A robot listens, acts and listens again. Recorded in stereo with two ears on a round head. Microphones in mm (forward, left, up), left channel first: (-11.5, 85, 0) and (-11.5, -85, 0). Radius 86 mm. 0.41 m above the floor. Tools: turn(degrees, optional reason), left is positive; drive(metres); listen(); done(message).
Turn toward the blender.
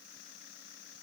listen()
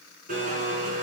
turn(degrees=-45, reason="The blender: about 45° right or 135° right.")
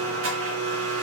turn(degrees=-85, reason="So it is at 85° right.")
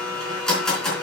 done("Facing the blender, 2 to 4 m away.")